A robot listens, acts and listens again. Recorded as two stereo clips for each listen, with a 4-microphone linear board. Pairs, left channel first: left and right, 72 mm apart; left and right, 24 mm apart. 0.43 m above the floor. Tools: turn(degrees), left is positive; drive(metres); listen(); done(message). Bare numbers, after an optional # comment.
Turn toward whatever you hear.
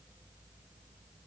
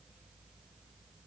listen()
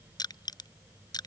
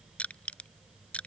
# The crushing: about 65° left or 115° left.
turn(65)
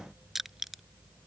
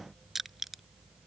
done("Found it: crushing, straight ahead.")